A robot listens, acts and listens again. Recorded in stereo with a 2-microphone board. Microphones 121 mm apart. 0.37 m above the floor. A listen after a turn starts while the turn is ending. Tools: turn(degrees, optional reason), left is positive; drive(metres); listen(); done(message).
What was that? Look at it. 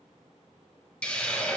turn(degrees=30)
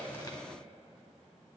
listen()
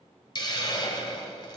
turn(degrees=140, reason="So it is at 140° left.")
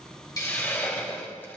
turn(degrees=20, reason="The hiss is now 20° left.")
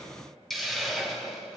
done("Facing the hiss.")